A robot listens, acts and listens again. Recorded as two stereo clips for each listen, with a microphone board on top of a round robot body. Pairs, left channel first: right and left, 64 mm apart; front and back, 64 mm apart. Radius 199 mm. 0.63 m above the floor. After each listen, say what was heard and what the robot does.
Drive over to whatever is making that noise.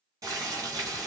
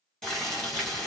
The boiling: 80° left. Turn 80° left.
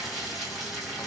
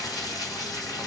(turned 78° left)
Drive 1.0 m forward.
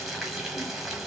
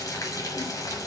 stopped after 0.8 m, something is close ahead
I am next to the boiling.